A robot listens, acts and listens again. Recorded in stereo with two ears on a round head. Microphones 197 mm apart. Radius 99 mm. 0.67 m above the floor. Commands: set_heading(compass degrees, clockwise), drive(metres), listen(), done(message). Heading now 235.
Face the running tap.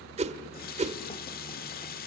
set_heading(190)
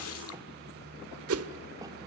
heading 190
set_heading(100)
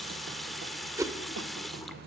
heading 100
done("Facing the running tap, 1 to 2 m away.")